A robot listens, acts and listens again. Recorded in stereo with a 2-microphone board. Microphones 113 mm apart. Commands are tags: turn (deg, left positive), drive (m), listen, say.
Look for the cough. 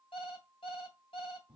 <listen/>
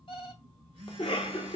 <turn deg="55"/>
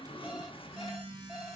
<turn deg="60"/>
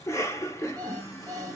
<turn deg="30"/>
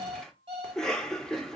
<say>Found it: a cough, straight ahead.</say>